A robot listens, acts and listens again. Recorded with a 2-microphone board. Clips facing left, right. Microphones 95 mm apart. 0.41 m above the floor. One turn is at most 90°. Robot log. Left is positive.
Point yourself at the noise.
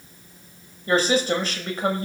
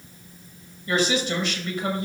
note: The woman speaking: about 40° left or 140° left.
cmd yaw +40
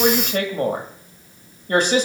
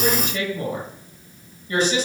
note: So it is at 90° left.
cmd yaw +90
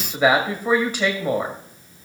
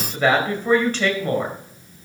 note: The woman speaking is now 15° left.
cmd yaw +15
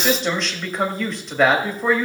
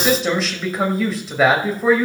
end: Found it: a woman speaking, straight ahead.